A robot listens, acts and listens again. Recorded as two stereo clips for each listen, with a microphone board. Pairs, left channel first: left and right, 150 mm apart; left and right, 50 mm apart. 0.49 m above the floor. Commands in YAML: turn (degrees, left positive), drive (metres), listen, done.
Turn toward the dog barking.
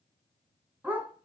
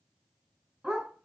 turn: -30
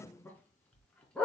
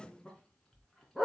done: "Facing the dog barking."